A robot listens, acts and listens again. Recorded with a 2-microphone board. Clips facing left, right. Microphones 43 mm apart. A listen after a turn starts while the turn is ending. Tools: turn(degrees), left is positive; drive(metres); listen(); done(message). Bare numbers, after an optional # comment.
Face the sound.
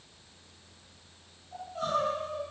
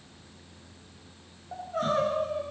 # The crying: about 55° right or 125° right.
turn(-55)
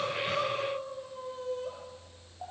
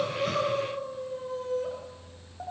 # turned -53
# So it is at 70° right.
turn(-70)
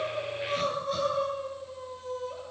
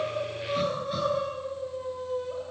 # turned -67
done("Found it: crying, straight ahead, over 4 m away.")